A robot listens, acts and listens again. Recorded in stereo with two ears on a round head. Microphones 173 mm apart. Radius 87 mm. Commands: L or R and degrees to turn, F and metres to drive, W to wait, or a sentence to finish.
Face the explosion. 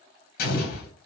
L50
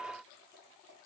W
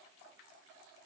I heard an explosion, but can't make it out now. It was about straight ahead or 80° left.